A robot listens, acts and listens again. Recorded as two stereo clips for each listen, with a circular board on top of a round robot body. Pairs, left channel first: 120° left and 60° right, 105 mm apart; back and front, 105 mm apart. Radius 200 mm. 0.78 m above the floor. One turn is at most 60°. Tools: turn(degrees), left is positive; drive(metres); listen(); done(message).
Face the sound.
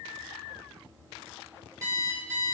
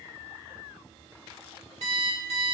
done("Found it: an alarm clock, straight ahead, 1 to 2 m away.")